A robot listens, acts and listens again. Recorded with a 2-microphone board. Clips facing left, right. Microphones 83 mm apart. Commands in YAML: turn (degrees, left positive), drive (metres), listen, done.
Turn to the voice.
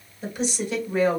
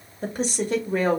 turn: -45
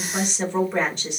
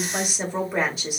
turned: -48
done: "Found it: a woman speaking, straight ahead, 1 to 2 m away."